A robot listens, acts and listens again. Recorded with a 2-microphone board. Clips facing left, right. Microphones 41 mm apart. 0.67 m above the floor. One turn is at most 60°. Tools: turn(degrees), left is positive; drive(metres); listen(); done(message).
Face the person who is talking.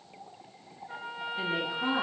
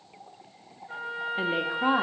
turn(degrees=-40)
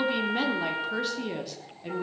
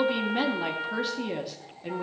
done("Facing the woman speaking.")